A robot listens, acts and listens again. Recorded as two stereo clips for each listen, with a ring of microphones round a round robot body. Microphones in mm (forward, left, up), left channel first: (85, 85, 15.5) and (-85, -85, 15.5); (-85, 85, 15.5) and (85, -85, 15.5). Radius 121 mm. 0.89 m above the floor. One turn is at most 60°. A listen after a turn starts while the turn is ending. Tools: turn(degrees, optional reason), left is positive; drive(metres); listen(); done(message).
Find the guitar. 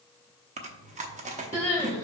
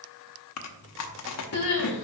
listen()
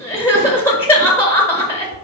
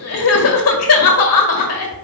listen()
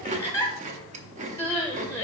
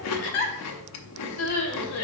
done("I can't make out a guitar to turn to.")